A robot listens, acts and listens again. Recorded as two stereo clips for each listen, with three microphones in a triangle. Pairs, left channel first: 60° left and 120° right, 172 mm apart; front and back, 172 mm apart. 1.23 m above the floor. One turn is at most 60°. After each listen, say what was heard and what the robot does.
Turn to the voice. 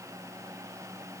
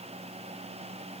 Keep listening.
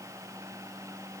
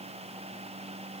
Keep listening.
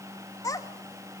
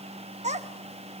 The child speaking: 130° left. Turn 60° left.
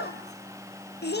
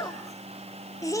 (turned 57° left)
The child speaking is now 70° left. Turn 60° left.
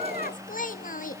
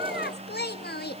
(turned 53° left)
The child speaking is now 20° left. Turn 20° left.
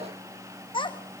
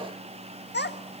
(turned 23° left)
Found it: a child speaking, straight ahead.